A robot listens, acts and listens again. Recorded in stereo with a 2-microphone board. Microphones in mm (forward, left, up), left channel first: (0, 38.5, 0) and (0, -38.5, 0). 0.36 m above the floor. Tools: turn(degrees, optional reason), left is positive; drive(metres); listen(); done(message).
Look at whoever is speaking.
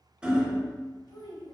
turn(degrees=65, reason="The child speaking: about 65° left or 115° left.")
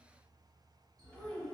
turn(degrees=20, reason="So it is at 20° left.")
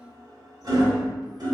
done("Found it: a child speaking, straight ahead.")